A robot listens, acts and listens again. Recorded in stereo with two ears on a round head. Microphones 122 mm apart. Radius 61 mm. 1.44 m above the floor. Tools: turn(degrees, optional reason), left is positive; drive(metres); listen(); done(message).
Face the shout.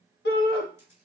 turn(degrees=90)
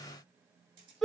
done("Facing the shout.")